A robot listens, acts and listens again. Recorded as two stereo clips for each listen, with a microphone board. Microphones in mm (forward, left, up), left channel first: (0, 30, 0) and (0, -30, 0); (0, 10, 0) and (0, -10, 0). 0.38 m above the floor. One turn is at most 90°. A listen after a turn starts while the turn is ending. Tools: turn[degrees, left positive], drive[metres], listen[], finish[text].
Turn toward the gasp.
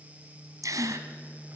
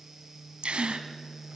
Thought: The gasp: about 70° right or 110° right.
Action: turn[-70]
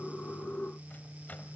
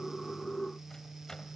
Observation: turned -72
Action: listen[]
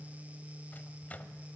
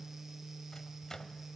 Action: finish[I heard a gasp, but can't make it out now. It was about 5° left or 40° right.]